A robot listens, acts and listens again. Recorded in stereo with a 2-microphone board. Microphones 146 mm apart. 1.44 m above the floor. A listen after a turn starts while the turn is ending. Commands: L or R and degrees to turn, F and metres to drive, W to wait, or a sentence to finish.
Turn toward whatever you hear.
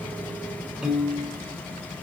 L30
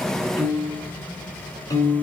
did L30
L155
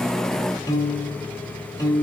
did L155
L25
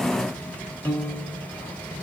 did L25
L10
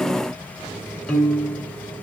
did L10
Found it: a piano, straight ahead, 1 to 2 m away.